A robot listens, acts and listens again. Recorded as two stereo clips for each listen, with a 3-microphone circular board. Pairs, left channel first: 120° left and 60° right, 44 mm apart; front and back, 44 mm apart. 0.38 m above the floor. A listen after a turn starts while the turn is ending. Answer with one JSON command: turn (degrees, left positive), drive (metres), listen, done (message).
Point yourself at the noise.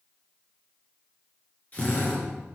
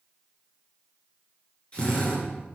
{"turn": 60}
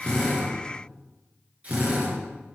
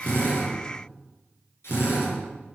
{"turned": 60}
{"done": "Found it: a drill, straight ahead, over 4 m away."}